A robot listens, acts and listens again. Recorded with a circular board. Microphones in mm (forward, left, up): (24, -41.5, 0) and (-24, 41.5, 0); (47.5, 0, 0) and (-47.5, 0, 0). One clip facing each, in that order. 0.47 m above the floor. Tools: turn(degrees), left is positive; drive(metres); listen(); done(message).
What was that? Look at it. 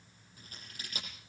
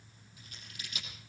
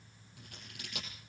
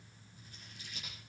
turn(degrees=-10)
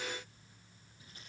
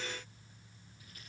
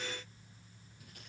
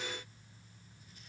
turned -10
listen()
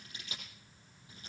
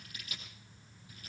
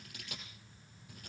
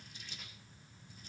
done("Found it: scissors, straight ahead, over 4 m away.")